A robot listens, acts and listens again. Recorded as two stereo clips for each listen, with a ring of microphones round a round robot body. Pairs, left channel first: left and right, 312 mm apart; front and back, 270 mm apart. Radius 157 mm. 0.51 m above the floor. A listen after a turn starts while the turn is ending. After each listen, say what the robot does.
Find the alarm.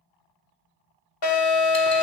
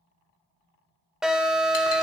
Turn 95° left.
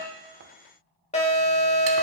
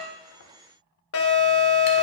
Turn 25° left.
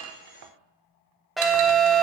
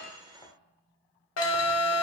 Found it: an alarm, straight ahead, 2 to 4 m away.